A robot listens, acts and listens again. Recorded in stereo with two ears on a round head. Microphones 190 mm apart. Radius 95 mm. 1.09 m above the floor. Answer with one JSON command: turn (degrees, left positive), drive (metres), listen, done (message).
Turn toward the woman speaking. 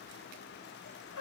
{"listen": true}
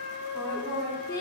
{"turn": 30}
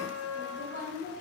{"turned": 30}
{"turn": 140}
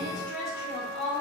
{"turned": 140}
{"turn": 55}
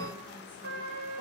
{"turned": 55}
{"listen": true}
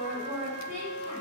{"done": "Facing the woman speaking, over 4 m away."}